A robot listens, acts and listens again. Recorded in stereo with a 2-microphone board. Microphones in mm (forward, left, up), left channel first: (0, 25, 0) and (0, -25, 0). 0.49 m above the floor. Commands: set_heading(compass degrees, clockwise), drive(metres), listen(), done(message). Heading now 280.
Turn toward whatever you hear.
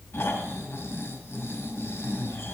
set_heading(225)
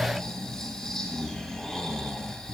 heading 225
done("Found it: snoring, straight ahead.")